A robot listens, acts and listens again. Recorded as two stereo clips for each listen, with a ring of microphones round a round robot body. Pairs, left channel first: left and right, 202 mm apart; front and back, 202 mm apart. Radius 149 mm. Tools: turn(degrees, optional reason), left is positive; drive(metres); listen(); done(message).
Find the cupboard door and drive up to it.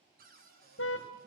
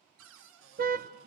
turn(degrees=-150, reason="The cupboard door: 150° right.")
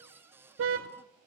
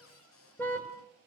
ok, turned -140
turn(degrees=-10, reason="The cupboard door is now 10° right.")
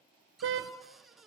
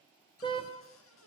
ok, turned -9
drive(metres=1.0)
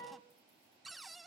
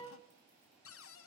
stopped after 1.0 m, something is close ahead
done("I am next to the cupboard door.")